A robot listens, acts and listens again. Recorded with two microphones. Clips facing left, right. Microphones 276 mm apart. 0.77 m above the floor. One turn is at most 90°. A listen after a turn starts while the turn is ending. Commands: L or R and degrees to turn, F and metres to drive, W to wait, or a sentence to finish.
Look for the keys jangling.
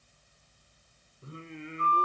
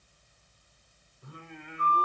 W
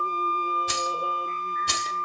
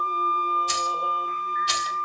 L55
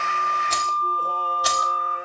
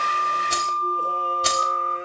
R30
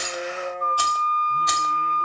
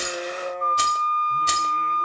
R30
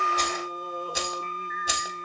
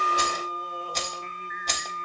L10
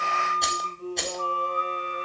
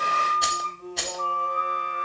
Facing the keys jangling, 1 to 2 m away.